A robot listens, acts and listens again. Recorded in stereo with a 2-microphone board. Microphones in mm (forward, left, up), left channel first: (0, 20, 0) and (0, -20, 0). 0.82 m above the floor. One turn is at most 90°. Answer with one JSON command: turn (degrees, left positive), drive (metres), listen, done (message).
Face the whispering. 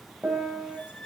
{"listen": true}
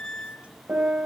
{"listen": true}
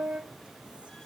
{"done": "I can't make out whispering to turn to."}